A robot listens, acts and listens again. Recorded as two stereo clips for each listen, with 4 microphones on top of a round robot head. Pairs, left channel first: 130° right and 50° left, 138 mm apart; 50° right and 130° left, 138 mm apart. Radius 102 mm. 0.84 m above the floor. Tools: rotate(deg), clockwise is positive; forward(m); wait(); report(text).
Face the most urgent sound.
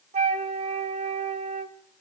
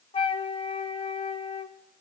wait()
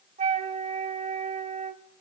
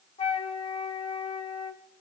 wait()
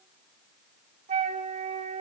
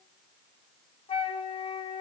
report("I can't make out anything urgent, only a flute.")